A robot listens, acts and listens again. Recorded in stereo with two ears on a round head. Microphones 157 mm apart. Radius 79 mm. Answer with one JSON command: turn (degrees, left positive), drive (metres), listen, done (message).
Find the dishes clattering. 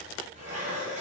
{"turn": -40}
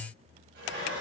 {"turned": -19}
{"turn": -120}
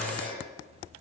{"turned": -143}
{"turn": 25}
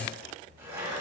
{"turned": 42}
{"turn": -15}
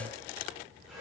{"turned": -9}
{"done": "Found it: dishes clattering, straight ahead, 2 to 4 m away."}